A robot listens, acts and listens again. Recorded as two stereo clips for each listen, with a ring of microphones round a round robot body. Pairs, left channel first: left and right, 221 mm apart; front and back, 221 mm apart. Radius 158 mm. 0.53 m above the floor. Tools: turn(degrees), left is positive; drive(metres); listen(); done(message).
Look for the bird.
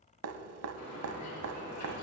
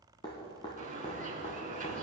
turn(degrees=125)
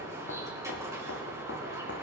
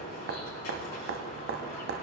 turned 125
turn(degrees=-10)
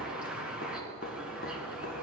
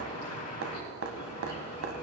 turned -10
done("Facing the bird.")